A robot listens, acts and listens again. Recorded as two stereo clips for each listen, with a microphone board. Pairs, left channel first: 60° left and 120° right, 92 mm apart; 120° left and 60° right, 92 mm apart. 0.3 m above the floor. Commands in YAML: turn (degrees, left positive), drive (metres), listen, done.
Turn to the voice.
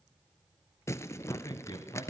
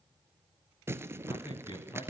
turn: 90
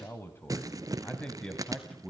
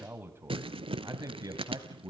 turn: -30
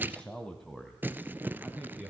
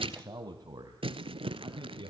turn: -40
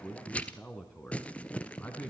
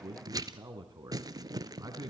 turn: -10
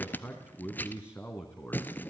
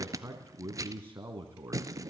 done: "Found it: a man speaking, straight ahead."